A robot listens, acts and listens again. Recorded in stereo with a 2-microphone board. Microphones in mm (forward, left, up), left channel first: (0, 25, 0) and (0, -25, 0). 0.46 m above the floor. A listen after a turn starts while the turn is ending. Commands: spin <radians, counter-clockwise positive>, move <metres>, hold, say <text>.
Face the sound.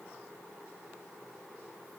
hold
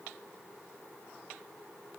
hold
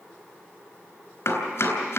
spin 1.13
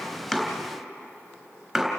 say Found it: chopping, straight ahead.